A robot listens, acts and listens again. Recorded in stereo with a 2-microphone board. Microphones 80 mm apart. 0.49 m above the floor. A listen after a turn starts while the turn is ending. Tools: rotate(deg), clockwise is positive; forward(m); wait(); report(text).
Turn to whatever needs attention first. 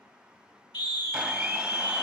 rotate(-70)
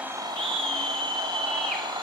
rotate(-15)
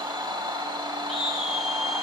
report("Facing the scream, 1 to 2 m away.")